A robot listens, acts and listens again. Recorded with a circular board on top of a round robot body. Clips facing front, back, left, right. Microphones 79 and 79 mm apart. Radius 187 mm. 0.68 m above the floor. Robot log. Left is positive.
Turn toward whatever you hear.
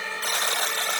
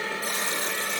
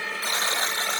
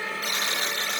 note: The buzzer: 30° left.
cmd yaw +30
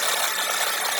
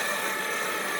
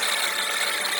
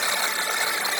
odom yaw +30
note: The buzzer is now 20° right.
cmd yaw -20
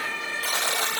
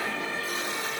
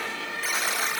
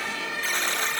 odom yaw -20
end: Found it: a buzzer, straight ahead, 1 to 2 m away.